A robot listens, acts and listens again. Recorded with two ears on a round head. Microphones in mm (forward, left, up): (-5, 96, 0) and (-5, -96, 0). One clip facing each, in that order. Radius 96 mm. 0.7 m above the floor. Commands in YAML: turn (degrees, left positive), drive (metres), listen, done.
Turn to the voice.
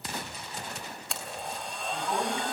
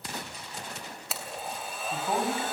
turn: -25
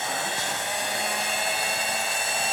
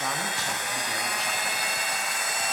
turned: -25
listen: true
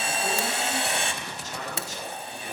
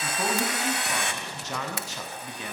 turn: -125
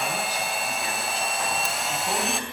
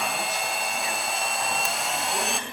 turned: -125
listen: true
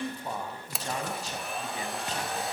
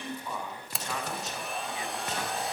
turn: 30
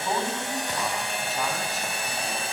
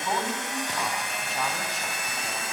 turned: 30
done: "Found it: a man speaking, straight ahead, over 4 m away."